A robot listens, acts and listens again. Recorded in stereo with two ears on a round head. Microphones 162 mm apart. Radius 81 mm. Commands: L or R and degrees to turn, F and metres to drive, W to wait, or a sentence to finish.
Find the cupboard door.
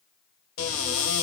L90
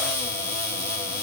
R10
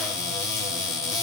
Facing the cupboard door.